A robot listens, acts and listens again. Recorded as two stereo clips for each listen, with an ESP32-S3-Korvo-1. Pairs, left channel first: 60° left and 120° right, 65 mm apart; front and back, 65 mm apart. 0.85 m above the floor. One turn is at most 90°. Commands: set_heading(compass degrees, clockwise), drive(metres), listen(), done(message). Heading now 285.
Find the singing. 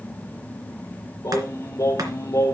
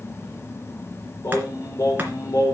set_heading(260)
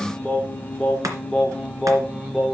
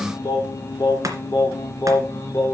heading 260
set_heading(295)
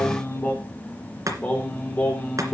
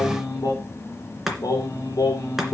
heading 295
done("Found it: singing, straight ahead.")